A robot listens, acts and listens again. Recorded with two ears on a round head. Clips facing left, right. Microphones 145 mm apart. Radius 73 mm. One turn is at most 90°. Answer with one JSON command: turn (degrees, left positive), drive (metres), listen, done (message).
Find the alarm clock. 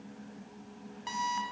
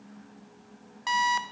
{"turn": -60}
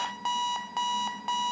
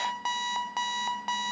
{"done": "Facing the alarm clock."}